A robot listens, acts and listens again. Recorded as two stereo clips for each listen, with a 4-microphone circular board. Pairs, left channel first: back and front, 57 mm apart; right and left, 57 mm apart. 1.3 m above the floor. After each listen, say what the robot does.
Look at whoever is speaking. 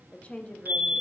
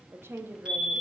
Turn 120° left.
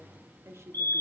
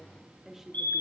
Turn 10° left.
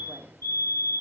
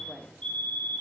Keep listening.
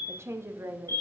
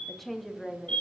Facing the woman speaking, under 1 m away.